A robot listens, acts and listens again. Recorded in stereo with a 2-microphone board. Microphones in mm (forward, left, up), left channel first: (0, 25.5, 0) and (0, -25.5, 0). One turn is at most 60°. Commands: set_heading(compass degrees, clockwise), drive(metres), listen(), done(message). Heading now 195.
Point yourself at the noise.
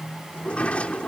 set_heading(170)
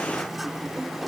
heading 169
done("Facing the sliding door.")